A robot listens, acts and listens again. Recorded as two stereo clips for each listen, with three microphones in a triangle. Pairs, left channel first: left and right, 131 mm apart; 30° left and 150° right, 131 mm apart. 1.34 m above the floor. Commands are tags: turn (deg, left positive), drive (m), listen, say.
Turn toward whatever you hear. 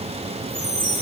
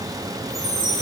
<turn deg="65"/>
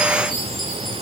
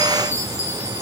<say>Facing the chime.</say>